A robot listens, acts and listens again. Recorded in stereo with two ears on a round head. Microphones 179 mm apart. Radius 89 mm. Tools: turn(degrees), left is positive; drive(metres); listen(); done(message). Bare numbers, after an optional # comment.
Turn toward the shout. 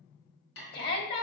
# The shout: about 55° left or 125° left.
turn(55)
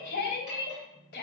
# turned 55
# So it is at 60° left.
turn(60)
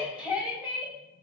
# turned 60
done("Facing the shout, 2 to 4 m away.")